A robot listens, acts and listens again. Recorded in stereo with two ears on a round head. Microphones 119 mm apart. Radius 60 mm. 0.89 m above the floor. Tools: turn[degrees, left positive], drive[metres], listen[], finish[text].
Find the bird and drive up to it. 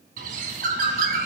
Thought: The bird: about 75° right or 105° right.
Action: turn[-75]
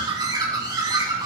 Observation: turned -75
Thought: So it is at 30° right.
Action: turn[-30]
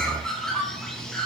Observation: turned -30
Action: drive[1.0]
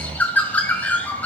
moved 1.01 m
Thought: The bird is now 10° left.
Action: turn[10]
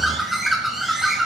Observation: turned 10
Action: drive[1.0]
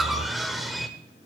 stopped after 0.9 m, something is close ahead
Action: finish[Arrived at the bird, straight ahead.]